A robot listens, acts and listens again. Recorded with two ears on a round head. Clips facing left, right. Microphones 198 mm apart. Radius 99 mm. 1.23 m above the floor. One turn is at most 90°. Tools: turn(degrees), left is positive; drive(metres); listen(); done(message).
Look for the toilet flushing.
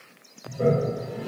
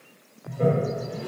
turn(degrees=30)
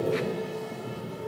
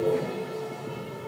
turn(degrees=90)
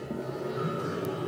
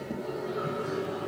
turn(degrees=35)
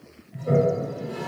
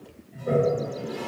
done("Found it: a toilet flushing, straight ahead, 1 to 2 m away.")